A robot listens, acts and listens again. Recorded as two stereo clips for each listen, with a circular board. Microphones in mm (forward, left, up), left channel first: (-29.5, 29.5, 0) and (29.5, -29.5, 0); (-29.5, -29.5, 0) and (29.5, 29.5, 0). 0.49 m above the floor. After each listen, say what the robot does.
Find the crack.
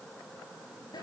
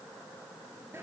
Keep listening.
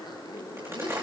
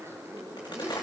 Turn 105° right.
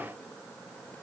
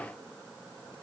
I heard a crack from this way, but can't make it out now.